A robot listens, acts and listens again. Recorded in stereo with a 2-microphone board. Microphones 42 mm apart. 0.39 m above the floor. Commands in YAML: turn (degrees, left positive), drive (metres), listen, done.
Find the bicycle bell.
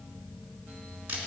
listen: true
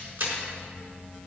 listen: true
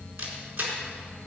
done: "I can't make out a bicycle bell to turn to."